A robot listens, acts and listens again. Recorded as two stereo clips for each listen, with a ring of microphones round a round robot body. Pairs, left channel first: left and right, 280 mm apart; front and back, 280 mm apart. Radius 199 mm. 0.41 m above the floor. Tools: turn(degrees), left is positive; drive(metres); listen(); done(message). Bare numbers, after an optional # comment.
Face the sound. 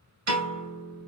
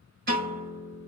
# The piano: 115° right.
turn(-115)
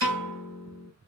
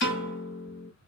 # The piano is now 50° right.
turn(-50)
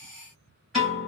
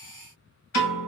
done("Found it: a piano, straight ahead.")